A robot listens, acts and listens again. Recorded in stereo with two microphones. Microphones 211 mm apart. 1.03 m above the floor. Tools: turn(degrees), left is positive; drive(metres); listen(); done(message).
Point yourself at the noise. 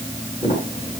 turn(degrees=25)
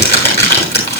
turn(degrees=125)
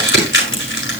turn(degrees=55)
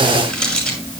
done("Found it: crumpling, straight ahead, over 4 m away.")